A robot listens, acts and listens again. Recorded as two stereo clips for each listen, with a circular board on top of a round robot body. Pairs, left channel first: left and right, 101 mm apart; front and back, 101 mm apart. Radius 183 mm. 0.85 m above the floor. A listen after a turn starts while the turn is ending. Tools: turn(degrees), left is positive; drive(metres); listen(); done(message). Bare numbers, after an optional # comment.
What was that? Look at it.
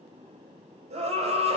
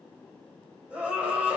# The scream: 100° right.
turn(-100)
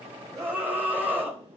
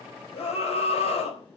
# The scream is now 15° right.
turn(-15)
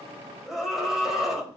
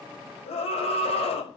done("Facing the scream.")